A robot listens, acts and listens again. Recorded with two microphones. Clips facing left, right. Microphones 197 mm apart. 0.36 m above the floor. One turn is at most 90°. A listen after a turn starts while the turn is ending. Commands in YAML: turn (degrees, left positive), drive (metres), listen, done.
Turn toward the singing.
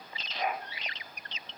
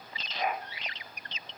listen: true
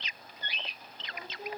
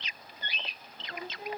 turn: -65
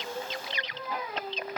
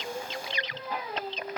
turn: -35
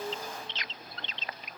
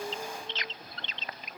turn: -15
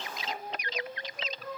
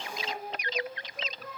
done: "Found it: singing, straight ahead."